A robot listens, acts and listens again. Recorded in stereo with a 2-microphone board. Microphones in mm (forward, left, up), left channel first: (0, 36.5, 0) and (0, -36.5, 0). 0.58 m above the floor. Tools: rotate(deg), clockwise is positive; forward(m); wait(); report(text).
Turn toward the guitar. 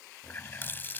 wait()
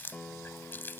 rotate(-30)
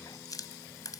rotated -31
wait()
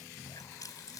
wait()
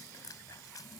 report("I heard a guitar, but can't make it out now. It was about 15° right or 135° left.")